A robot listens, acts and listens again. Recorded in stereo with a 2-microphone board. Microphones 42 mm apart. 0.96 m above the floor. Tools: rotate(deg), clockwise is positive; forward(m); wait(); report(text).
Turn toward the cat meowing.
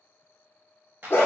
wait()
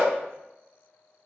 wait()
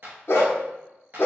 report("I can't make out a cat meowing to turn to.")